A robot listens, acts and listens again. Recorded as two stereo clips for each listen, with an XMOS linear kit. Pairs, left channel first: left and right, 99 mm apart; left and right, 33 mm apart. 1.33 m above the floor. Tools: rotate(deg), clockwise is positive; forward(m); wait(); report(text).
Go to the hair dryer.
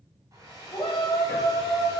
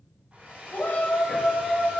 rotate(40)
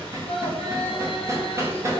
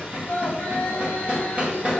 wait()
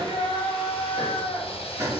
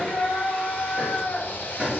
wait()
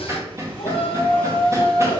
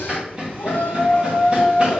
report("I heard a hair dryer, but can't make it out now. It was about straight ahead or 100° right. I did not reach it.")